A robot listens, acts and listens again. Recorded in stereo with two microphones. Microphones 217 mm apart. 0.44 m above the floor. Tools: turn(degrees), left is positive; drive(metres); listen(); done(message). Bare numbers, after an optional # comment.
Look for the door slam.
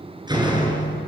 # The door slam: about 20° right or 160° right.
turn(-20)
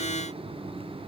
listen()
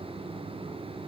done("I heard a door slam, but can't make it out now. It was about straight ahead or 140° right.")